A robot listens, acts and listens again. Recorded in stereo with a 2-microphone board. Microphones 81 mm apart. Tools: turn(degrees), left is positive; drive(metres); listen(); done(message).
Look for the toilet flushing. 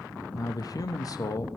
listen()
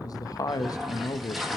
turn(degrees=30)
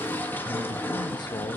turn(degrees=150)
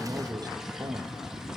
listen()
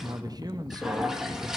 turn(degrees=-10)
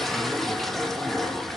done("Found it: a toilet flushing, straight ahead, 1 to 2 m away.")